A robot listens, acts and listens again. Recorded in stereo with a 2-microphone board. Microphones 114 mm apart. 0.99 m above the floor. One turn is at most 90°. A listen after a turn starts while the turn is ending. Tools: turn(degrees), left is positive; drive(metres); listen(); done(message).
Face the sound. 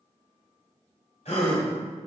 turn(degrees=65)
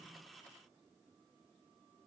listen()
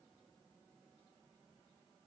done("I heard a gasp, but can't make it out now. It was about straight ahead or 50° left.")